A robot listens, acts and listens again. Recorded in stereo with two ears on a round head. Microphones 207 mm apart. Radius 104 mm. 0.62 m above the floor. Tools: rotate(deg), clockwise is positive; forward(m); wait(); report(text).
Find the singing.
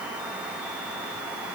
wait()
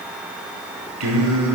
rotate(90)
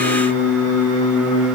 report("Found it: singing, straight ahead.")